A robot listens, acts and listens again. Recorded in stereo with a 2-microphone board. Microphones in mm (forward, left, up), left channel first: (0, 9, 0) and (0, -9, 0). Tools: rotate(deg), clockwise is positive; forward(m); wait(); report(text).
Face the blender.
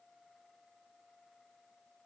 wait()
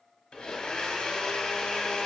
rotate(-70)
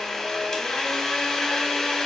rotate(-35)
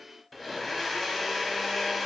report("Facing the blender.")